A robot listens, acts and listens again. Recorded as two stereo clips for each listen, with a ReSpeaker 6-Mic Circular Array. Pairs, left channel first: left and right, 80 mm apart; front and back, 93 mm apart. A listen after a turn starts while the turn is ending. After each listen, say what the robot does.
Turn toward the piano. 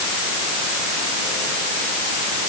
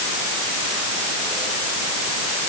Keep listening.
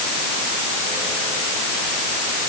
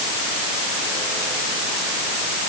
Keep listening.
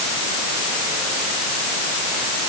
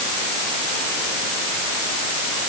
I can't make out a piano to turn to.